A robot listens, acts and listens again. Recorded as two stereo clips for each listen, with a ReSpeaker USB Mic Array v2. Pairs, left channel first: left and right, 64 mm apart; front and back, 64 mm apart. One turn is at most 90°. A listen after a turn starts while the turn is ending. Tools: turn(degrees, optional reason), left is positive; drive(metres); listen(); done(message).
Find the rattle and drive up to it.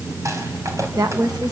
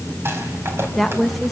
turn(degrees=-90, reason="The rattle: 130° right.")
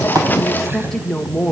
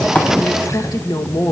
turn(degrees=-40, reason="Nothing new. It was at 40° right.")
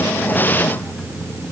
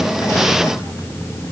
listen()
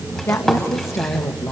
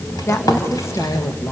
drive(metres=1.0)
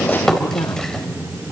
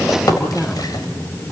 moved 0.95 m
turn(degrees=10, reason="The rattle is now 10° left.")
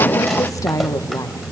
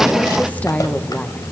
listen()
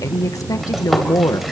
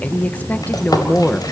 drive(metres=1.0)
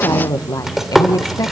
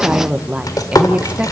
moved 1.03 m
drive(metres=1.0)
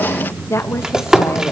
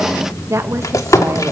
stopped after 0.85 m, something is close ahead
turn(degrees=-15, reason="The rattle is now 15° right.")
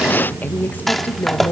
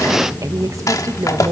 done("I am next to the rattle.")